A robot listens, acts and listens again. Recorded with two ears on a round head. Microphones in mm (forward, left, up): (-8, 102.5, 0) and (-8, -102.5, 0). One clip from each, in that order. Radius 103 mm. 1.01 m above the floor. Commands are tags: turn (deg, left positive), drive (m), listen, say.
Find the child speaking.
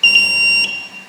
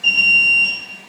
<listen/>
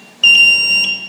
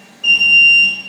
<listen/>
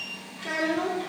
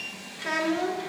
<turn deg="-60"/>
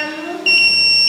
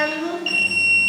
<turn deg="-65"/>
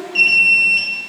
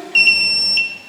<turn deg="-10"/>
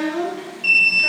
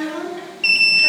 <turn deg="-15"/>
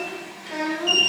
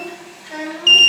<say>Facing the child speaking.</say>